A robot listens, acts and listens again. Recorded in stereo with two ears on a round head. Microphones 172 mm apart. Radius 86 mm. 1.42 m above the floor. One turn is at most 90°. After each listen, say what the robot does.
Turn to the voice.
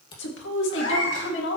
Turn 70° left.
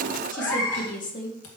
Turn 40° left.
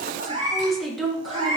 Found it: a woman speaking, straight ahead.